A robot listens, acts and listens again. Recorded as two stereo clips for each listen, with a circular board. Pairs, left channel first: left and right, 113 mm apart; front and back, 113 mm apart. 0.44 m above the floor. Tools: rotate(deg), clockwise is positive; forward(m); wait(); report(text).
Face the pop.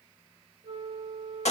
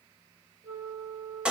wait()
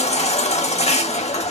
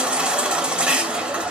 wait()
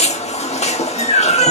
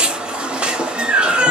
report("I can't make out a pop to turn to.")